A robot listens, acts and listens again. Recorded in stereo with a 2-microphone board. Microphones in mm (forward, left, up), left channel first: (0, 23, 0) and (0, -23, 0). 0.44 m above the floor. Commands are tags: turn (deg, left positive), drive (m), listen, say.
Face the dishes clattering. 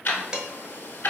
<turn deg="-30"/>
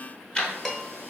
<turn deg="15"/>
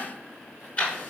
<listen/>
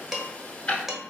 <say>Facing the dishes clattering, under 1 m away.</say>